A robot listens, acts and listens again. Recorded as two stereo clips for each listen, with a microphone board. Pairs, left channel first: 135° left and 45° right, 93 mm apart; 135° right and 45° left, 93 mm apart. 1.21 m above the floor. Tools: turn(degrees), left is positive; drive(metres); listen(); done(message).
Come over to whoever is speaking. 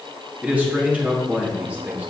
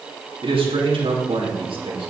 turn(degrees=30)
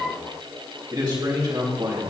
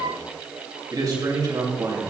drive(metres=1.0)
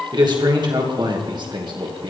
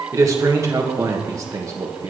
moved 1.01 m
turn(degrees=-10)
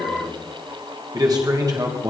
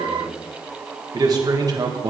drive(metres=1.0)
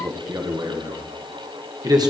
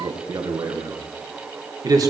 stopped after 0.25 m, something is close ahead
done("I am next to the man speaking.")